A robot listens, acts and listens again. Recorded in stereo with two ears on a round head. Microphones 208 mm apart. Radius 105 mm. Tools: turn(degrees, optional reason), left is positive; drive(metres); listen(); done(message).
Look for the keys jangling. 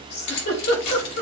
turn(degrees=90)
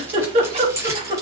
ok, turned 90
turn(degrees=-15, reason="So it is at 15° right.")
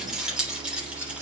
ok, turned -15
done("Found it: keys jangling, straight ahead.")